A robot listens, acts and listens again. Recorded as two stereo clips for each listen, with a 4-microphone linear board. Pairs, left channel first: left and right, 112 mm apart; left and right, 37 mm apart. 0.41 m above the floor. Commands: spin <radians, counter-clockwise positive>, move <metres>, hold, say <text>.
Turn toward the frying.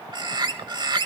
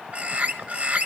hold
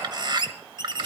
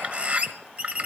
hold
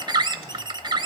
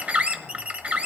say I can't make out frying, only a bird.